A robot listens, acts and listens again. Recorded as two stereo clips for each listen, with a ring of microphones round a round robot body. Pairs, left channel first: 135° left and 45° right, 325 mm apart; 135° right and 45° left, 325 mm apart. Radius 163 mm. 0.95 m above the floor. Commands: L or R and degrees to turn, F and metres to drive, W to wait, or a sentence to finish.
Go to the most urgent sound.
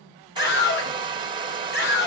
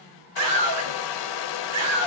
L75
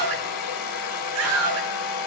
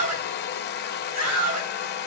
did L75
F1.0
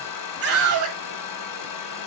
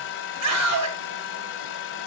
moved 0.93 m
F1.0
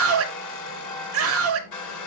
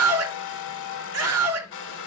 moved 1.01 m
F1.0
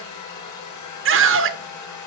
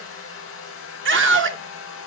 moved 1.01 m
F1.0
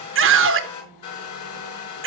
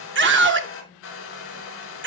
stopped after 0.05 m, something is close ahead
Arrived at the scream, straight ahead.